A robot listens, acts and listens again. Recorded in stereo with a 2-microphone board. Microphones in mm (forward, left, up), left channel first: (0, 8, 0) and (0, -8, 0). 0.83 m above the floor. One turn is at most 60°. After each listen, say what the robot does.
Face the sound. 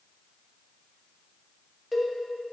Turn 30° right.
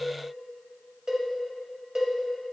Turn 60° right.
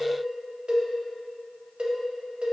Turn 60° right.
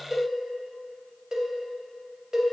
Turn 35° right.
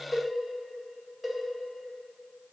Facing the cowbell, under 1 m away.